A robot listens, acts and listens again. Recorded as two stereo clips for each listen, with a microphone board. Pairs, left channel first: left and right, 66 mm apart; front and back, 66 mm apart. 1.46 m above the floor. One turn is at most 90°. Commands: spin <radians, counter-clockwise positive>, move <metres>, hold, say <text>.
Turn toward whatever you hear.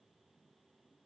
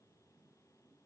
hold
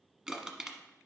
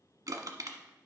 spin -1.57
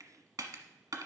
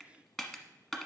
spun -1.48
spin -1.40
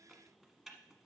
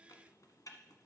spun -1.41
say Found it: crushing, straight ahead, 1 to 2 m away.